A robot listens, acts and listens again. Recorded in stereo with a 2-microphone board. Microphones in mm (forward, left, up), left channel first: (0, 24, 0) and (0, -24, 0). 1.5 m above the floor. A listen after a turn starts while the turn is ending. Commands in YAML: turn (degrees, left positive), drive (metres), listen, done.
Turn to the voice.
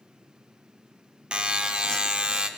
listen: true
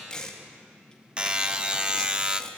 listen: true
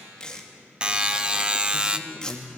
turn: -30
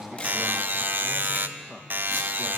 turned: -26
turn: 10
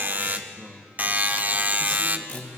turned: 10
done: "Facing the man speaking."